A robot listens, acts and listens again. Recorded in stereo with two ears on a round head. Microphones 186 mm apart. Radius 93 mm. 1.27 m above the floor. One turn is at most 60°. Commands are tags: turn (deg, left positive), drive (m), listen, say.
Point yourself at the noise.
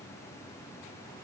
<listen/>
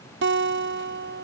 <turn deg="-60"/>
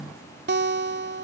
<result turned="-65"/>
<turn deg="-50"/>
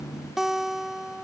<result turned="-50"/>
<say>Facing the guitar.</say>